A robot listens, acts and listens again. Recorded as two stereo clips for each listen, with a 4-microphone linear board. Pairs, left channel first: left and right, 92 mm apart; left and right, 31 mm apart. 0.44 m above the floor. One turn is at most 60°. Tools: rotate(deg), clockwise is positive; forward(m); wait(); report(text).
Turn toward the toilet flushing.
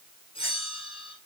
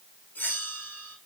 wait()
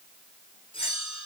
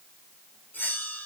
wait()
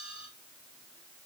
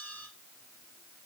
report("I can't make out a toilet flushing to turn to.")